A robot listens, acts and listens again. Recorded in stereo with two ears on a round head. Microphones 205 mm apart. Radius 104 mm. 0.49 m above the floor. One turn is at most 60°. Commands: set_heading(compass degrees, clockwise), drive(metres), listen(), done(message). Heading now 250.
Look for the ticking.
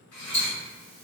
set_heading(215)
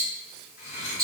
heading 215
done("Found it: ticking, straight ahead, 1 to 2 m away.")